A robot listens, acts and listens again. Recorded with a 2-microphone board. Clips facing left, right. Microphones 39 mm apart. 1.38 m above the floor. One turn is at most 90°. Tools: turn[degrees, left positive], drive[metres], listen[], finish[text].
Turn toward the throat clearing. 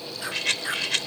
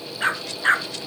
Action: listen[]
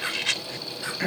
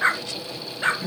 Thought: The throat clearing: about 65° left or 115° left.
Action: turn[65]
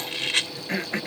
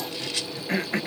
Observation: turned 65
Action: finish[Found it: throat clearing, straight ahead.]